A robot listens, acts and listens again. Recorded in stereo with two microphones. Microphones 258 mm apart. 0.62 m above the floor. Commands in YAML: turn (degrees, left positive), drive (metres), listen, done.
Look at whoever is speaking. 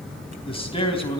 turn: 20
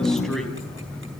listen: true
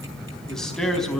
done: "Facing the man speaking, 2 to 4 m away."